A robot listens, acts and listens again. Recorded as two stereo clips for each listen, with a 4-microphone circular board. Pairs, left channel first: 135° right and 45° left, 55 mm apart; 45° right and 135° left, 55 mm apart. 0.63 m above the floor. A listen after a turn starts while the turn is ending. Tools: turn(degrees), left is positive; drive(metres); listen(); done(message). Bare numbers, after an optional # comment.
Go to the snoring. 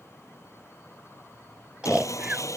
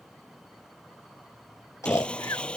# The snoring: 25° right.
turn(-25)
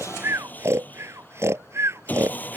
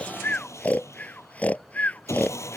# The snoring is now 15° left.
turn(15)
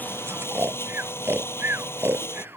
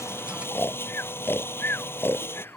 drive(1.0)
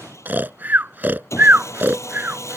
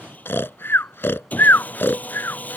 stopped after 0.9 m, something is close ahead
done("I am next to the snoring.")